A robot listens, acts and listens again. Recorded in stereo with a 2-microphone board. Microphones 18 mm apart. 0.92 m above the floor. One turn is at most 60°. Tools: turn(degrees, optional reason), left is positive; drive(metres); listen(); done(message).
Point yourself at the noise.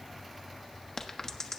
turn(degrees=30, reason="The crack: about 30° left or 150° left.")
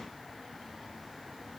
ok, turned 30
listen()
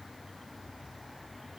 done("I heard a crack, but can't make it out now. It was about straight ahead or 120° left.")